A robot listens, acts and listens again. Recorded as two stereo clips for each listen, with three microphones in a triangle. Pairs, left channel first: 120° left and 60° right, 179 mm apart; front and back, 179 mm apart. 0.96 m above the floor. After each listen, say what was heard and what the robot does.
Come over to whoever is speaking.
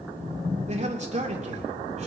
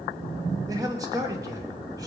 The man speaking: 110° right. Turn 110° right.
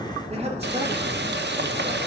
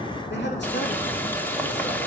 Keep listening.
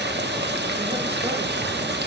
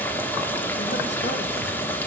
Keep listening.
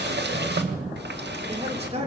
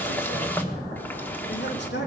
Drive 1.0 m forward.
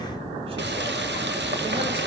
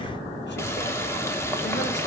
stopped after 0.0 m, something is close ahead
Keep listening.
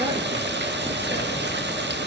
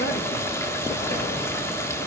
Keep listening.
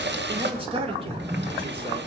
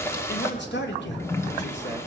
Something is in my way. I am facing the man speaking but have not reached it.